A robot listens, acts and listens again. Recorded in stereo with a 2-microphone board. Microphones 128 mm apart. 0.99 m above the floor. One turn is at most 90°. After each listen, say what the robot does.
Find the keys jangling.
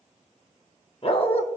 Keep listening.
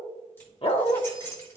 Turn 20° left.
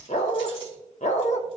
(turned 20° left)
Keep listening.
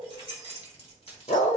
Turn 90° left.
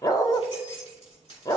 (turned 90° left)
Turn 50° left.
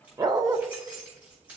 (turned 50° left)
Turn 10° right.
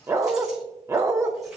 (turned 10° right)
Keep listening.
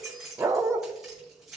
Found it: keys jangling, straight ahead.